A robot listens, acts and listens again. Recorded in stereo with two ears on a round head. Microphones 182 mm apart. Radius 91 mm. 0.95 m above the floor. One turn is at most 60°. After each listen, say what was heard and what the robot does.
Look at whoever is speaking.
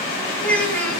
Turn 30° left.
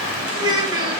So it is at 25° right. Turn 25° right.
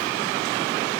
Keep listening.
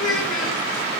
Facing the child speaking, over 4 m away.